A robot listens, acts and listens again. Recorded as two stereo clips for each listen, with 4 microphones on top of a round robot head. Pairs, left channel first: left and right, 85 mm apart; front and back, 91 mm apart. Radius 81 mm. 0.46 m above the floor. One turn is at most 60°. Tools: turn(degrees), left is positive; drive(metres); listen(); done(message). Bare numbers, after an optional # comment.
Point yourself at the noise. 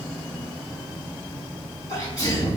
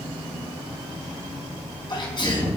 # The sneeze: 35° left.
turn(35)
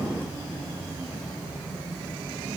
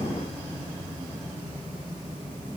done("Facing where the sneeze came from. I can't hear it now.")